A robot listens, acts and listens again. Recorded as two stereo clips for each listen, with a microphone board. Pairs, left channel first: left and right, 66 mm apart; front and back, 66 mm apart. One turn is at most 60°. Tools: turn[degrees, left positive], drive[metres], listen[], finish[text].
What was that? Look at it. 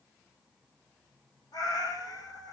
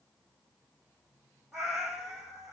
Thought: The cat meowing: 100° left.
Action: turn[60]
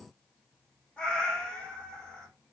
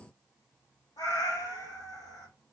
Thought: The cat meowing is now 15° left.
Action: turn[15]
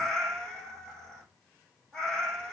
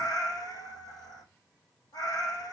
Thought: The cat meowing is now 10° left.
Action: turn[10]
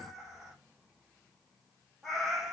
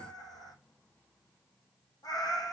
Action: finish[Found it: a cat meowing, straight ahead.]